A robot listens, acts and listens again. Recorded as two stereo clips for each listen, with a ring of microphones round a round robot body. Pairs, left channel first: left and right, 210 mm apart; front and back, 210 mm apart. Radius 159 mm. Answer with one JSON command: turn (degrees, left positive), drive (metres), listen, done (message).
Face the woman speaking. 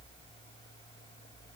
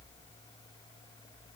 {"listen": true}
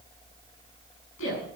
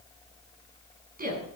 {"turn": 135}
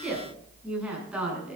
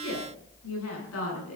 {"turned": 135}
{"done": "Facing the woman speaking."}